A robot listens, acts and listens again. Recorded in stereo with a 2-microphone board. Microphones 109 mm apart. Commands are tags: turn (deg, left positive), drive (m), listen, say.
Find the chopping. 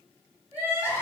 <listen/>
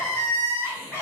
<listen/>
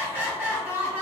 <say>I can't make out chopping to turn to.</say>